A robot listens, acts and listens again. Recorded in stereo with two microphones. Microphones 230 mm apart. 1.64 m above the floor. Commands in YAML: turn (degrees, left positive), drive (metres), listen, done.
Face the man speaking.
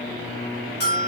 listen: true
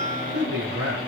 turn: -90
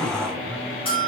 listen: true
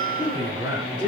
turn: -15
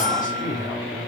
done: "Found it: a man speaking, straight ahead."